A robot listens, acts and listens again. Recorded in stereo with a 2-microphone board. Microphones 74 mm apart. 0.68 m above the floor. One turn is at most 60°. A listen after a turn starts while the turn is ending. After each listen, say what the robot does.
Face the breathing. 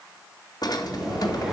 Turn 30° right.
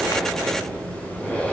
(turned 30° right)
Turn 15° left.
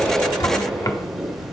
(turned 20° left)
Found it: breathing, straight ahead, 2 to 4 m away.